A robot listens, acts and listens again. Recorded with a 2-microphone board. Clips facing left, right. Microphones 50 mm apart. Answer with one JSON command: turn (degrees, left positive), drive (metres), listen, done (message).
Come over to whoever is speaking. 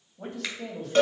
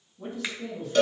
{"turn": 60}
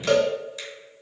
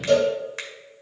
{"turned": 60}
{"listen": true}
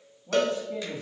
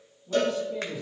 {"turn": 45}
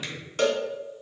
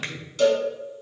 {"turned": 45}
{"drive": 1.0}
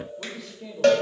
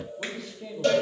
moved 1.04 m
{"drive": 1.0}
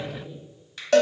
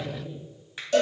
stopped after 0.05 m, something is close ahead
{"done": "Arrived at the man speaking, straight ahead."}